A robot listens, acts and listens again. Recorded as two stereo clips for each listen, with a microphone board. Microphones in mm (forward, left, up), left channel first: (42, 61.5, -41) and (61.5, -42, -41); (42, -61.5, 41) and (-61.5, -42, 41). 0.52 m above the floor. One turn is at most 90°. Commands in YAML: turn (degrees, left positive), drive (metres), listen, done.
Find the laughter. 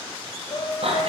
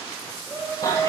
turn: 90
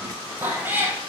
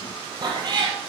turn: 10
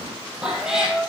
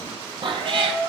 turn: 10
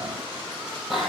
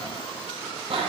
listen: true
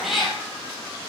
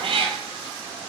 listen: true
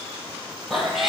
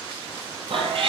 done: "Facing where the laughter came from. I can't hear it now."